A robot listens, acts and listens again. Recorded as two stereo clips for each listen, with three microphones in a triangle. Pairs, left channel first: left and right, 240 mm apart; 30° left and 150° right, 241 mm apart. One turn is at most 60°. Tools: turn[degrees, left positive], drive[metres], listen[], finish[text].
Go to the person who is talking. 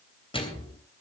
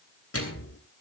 Action: listen[]
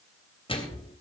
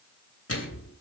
Action: listen[]
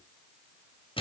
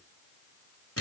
Action: finish[I can't make out anyone speaking to turn to.]